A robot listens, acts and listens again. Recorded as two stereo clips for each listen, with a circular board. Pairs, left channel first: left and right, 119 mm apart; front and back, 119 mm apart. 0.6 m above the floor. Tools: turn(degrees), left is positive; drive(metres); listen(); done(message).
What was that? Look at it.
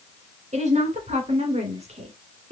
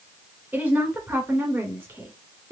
turn(degrees=-110)
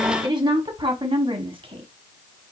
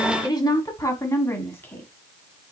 turn(degrees=-65)
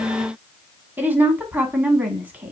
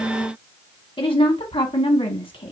turn(degrees=-20)
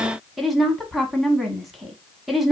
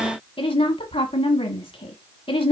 done("Facing the woman speaking, 1 to 2 m away.")